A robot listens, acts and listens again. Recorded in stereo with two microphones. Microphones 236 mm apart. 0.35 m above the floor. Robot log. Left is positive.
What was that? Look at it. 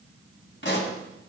note: The pop: about 55° left or 125° left.
cmd yaw +55
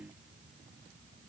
cmd idle
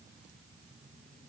end: I heard a pop, but can't make it out now. It was about straight ahead or 70° left.